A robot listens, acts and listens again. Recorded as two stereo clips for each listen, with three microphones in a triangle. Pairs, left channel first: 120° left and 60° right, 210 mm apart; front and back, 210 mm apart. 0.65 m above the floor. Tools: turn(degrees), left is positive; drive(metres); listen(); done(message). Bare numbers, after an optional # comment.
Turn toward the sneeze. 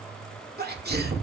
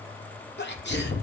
# The sneeze: 25° right.
turn(-25)
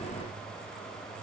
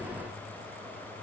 done("Facing where the sneeze came from. I can't hear it now.")